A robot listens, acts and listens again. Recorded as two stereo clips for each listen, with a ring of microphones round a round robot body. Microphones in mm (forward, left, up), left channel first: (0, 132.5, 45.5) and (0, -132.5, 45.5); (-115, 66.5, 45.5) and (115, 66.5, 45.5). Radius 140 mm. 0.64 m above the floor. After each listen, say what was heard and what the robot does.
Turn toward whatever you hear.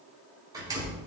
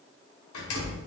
The door slam: 165° right. Turn 165° right.
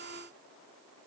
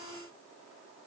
I heard a door slam from this way, but can't make it out now.